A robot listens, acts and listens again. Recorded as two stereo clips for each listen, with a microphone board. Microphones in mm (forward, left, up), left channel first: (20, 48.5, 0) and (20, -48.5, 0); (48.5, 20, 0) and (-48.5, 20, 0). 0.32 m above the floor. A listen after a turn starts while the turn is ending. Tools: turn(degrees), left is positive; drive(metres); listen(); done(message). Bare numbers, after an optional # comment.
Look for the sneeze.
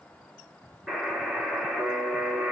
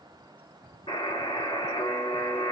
listen()
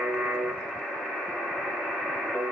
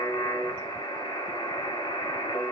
listen()
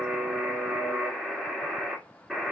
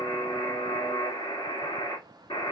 done("I can't make out a sneeze to turn to.")